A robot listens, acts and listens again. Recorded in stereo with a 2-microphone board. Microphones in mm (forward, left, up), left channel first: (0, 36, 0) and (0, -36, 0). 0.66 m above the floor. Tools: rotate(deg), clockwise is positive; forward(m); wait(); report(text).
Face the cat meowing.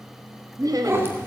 rotate(30)
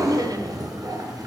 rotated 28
rotate(120)
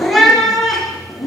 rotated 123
report("Facing the cat meowing.")